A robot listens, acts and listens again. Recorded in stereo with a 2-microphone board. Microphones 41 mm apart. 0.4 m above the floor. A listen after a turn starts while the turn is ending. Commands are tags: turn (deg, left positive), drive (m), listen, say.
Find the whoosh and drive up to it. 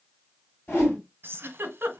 <turn deg="50"/>
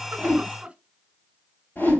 <turn deg="70"/>
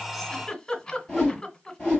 <turn deg="20"/>
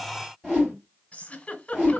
<drive m="1.0"/>
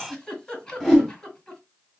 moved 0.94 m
<turn deg="10"/>
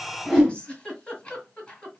<drive m="1.0"/>
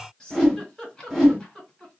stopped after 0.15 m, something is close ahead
<say>I am next to the whoosh.</say>